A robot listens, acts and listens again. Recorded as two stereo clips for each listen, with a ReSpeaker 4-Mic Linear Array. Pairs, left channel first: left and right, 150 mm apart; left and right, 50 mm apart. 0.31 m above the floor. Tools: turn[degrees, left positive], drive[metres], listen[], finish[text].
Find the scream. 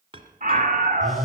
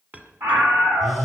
Thought: The scream: about 60° right or 120° right.
Action: turn[-60]
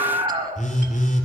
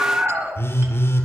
Thought: So it is at 45° right.
Action: turn[-45]
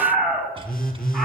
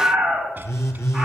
Action: finish[Found it: a scream, straight ahead.]